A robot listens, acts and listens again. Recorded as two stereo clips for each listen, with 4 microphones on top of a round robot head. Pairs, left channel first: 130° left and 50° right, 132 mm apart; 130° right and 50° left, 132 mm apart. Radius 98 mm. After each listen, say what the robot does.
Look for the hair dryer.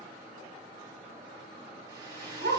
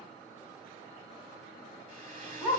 Turn 10° left.
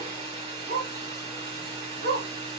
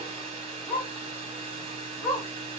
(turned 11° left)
Facing the hair dryer, 2 to 4 m away.